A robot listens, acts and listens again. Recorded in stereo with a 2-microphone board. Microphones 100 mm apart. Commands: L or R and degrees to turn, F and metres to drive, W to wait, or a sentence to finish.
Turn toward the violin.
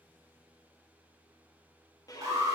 L35
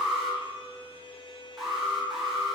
L105
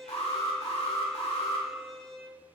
Facing the violin, 1 to 2 m away.